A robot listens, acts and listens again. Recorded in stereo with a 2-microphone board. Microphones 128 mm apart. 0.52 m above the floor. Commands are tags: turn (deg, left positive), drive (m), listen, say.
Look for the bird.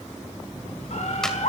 <turn deg="65"/>
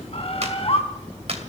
<turn deg="50"/>
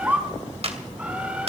<turn deg="-10"/>
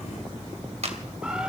<listen/>
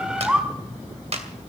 <turn deg="-10"/>
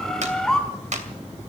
<say>Facing the bird, 2 to 4 m away.</say>